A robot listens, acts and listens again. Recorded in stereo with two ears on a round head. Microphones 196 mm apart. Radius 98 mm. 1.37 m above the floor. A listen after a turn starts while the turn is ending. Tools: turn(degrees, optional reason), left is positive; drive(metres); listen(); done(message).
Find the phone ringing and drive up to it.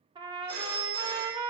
turn(degrees=-65, reason="The phone ringing: about 65° right or 115° right.")
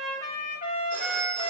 listen()
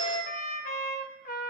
listen()
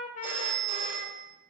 drive(metres=1.0)
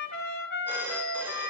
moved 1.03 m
turn(degrees=-10, reason="The phone ringing is now 10° right.")
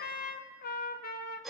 drive(metres=1.0)
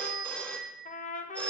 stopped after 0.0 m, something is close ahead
done("I am next to the phone ringing.")